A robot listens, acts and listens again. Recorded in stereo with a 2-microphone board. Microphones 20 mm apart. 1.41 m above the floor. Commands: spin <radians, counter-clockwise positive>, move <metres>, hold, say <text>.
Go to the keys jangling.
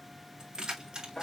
spin -0.70
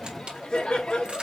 spin -1.75
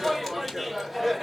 hold
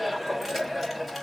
hold
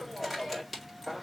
move 1.0
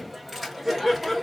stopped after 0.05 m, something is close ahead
hold
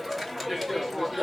hold
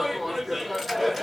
say I heard keys jangling from this way, but can't make it out now. I did not reach it.